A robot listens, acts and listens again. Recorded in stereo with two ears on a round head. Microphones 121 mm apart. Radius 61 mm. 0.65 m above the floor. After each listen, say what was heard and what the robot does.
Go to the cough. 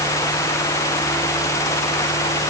Keep listening.
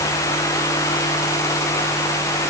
Keep listening.
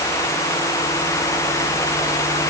I can't make out a cough to turn to.